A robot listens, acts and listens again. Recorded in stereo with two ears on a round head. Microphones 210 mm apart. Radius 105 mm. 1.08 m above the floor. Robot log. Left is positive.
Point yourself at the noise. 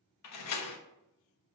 cmd yaw +90
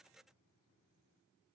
end: I heard a door slam from this way, but can't make it out now.